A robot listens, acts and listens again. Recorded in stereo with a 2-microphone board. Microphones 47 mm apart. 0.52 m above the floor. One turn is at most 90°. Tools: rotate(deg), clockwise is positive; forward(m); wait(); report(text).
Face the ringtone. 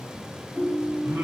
rotate(25)
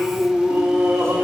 rotate(90)
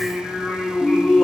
rotate(35)
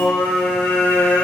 wait()
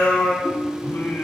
report("Found it: a ringtone, straight ahead, 1 to 2 m away.")